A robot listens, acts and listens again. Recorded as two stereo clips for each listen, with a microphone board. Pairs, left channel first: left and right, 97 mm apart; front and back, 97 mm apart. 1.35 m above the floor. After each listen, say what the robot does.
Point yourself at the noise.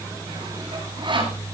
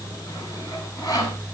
Turn 50° right.
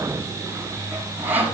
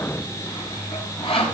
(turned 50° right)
Turn 15° right.
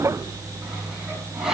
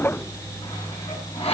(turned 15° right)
Facing the sawing.